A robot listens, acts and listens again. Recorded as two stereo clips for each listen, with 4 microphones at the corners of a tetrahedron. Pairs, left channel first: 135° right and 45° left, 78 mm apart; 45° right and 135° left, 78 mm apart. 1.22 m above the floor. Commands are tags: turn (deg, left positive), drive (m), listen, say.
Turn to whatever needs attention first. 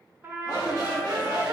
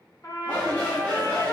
<turn deg="-110"/>
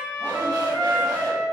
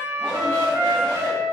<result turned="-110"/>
<listen/>
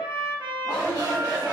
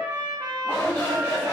<turn deg="10"/>
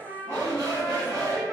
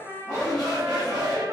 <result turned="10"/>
<say>Found it: a shout, straight ahead, 1 to 2 m away.</say>